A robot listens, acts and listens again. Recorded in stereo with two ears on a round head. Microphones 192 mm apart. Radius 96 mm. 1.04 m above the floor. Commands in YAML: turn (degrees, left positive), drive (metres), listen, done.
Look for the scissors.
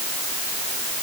listen: true
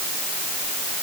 listen: true
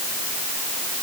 done: "I can't make out scissors."